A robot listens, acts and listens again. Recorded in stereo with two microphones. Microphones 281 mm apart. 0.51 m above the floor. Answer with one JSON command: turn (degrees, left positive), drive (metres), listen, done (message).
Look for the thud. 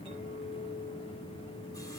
{"listen": true}
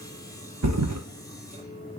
{"turn": -90}
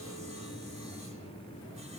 {"done": "I heard a thud from this way, but can't make it out now."}